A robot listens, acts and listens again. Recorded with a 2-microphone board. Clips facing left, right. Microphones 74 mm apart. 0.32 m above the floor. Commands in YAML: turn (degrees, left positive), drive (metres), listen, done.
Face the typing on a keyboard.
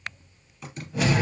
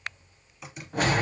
turn: -30
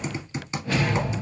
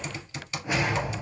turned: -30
turn: 25
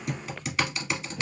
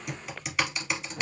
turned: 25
done: "Facing the typing on a keyboard, 1 to 2 m away."